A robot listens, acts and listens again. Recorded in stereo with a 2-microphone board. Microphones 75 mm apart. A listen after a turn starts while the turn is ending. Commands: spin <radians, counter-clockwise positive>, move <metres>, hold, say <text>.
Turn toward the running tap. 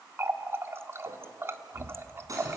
spin -0.61
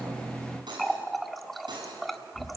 say Found it: a running tap, straight ahead, 1 to 2 m away.